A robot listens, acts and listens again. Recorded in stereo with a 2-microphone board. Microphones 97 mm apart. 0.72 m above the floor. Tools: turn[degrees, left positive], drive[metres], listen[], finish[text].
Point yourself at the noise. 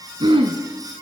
Thought: The throat clearing: about 65° right or 115° right.
Action: turn[-65]
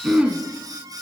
Thought: So it is at 10° right.
Action: turn[-10]
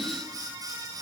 Action: listen[]
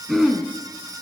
Action: finish[Facing the throat clearing, 1 to 2 m away.]